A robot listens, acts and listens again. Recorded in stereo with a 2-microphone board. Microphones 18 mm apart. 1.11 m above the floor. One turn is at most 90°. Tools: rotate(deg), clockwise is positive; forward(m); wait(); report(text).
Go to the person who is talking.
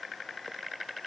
wait()
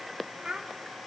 rotate(60)
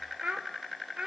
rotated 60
rotate(65)
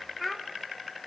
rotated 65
forward(1.0)
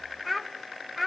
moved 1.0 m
forward(1.0)
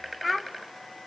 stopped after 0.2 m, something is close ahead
report("I am next to the child speaking.")